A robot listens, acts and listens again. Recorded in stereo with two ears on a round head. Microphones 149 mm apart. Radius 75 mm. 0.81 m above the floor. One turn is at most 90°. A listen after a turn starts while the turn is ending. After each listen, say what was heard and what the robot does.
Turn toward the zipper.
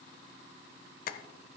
Keep listening.
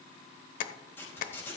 Turn 30° left.
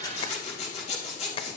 So it is at 140° left. Turn 90° left.
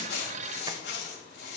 The zipper is now 75° left. Turn 75° left.
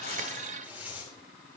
The zipper is now 10° right. Turn 10° right.
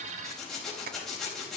Facing the zipper, over 4 m away.